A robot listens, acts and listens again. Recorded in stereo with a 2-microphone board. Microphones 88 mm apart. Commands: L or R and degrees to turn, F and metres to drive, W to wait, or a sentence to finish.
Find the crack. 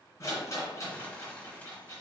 W
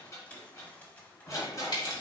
L55
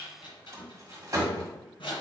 W
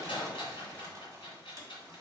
I heard a crack, but can't make it out now. It was about straight ahead or 70° left.